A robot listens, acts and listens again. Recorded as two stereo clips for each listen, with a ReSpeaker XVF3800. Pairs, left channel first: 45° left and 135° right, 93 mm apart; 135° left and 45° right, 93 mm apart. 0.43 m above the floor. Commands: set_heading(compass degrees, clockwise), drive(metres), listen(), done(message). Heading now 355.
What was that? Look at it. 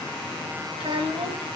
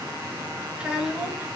set_heading(120)
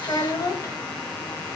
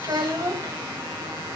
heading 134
done("Found it: a child speaking, straight ahead, 1 to 2 m away.")